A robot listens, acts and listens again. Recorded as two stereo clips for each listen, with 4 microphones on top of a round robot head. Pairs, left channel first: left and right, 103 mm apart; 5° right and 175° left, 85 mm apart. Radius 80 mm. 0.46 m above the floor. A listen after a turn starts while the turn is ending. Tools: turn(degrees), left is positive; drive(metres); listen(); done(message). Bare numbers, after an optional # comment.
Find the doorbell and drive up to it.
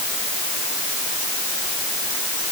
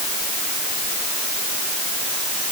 listen()
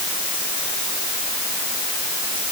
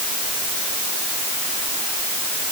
listen()
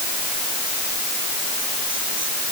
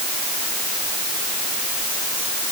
done("I can't make out a doorbell.")